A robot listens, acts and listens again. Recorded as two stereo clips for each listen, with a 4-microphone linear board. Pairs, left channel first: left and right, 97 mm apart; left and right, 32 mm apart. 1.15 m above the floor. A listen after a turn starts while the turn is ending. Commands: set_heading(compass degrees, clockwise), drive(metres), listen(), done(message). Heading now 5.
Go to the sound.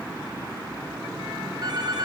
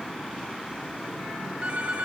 set_heading(55)
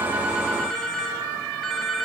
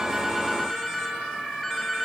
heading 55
drive(1.0)
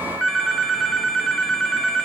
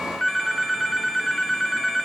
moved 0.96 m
drive(1.0)
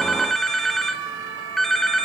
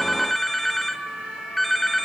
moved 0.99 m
drive(1.0)
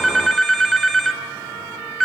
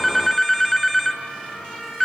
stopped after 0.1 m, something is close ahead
done("Arrived at the phone ringing, straight ahead.")